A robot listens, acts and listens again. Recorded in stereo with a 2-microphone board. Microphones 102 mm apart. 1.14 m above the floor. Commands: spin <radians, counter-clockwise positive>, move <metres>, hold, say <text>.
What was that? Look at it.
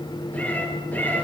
spin 0.35
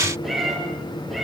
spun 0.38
spin 0.52
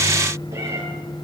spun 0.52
spin -0.44
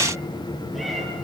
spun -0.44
hold
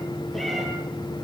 hold
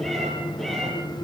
say Found it: a cat meowing, straight ahead.